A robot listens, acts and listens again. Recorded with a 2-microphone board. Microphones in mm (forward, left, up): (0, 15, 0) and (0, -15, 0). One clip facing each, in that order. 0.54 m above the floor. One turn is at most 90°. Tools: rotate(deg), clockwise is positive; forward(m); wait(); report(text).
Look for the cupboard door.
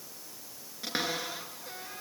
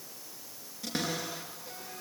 rotate(-30)
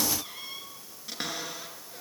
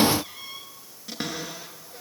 report("Facing the cupboard door, over 4 m away.")